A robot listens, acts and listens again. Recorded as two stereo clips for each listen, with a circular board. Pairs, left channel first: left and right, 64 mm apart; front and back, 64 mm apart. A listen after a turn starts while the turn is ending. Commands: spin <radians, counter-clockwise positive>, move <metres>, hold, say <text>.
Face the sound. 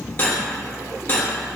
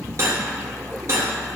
spin 2.53
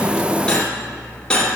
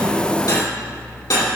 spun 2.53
spin 0.26
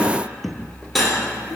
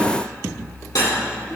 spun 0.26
say Found it: cutlery clinking, straight ahead, 2 to 4 m away.